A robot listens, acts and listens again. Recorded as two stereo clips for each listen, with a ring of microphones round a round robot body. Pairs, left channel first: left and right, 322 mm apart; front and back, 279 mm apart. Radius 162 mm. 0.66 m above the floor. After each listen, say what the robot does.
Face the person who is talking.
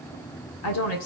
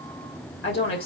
Turn 45° left.
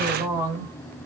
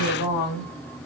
Turn 10° right.
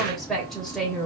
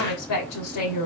Found it: a woman speaking, straight ahead.